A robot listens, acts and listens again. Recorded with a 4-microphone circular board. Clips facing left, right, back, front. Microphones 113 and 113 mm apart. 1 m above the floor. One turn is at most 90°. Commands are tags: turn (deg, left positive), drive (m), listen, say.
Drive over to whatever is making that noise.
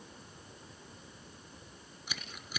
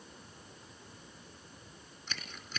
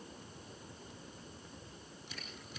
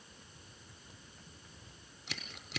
<turn deg="10"/>
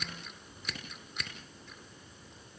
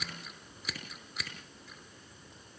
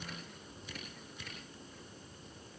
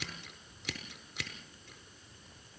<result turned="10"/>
<drive m="1.0"/>
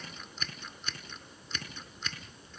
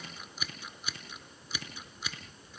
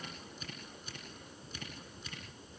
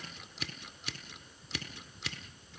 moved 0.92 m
<drive m="1.0"/>
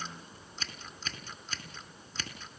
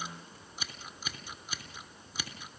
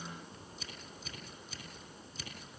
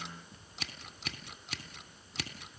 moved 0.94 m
<turn deg="-10"/>
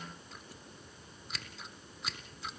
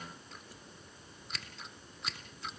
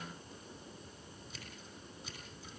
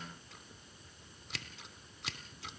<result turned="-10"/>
<drive m="1.0"/>
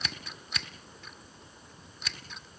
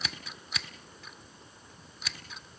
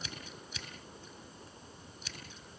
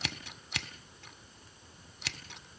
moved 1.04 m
<drive m="1.0"/>
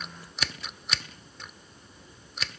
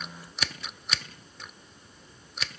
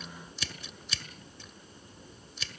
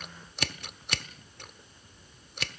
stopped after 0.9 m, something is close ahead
<say>Arrived at the scissors, straight ahead.</say>